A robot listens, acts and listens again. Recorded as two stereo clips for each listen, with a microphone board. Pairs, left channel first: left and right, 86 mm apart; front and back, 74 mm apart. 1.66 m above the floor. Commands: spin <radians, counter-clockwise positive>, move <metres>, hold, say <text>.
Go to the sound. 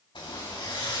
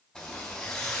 spin 1.40
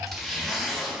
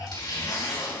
move 1.0
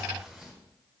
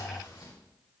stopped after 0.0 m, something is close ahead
say Blocked. The zipper is further on, straight ahead.